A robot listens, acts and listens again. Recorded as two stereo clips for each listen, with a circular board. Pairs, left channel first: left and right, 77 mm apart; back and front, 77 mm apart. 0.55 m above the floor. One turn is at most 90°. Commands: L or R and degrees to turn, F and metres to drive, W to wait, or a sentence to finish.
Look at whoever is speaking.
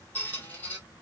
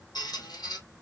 W
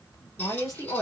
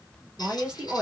L75
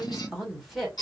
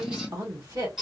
Facing the woman speaking.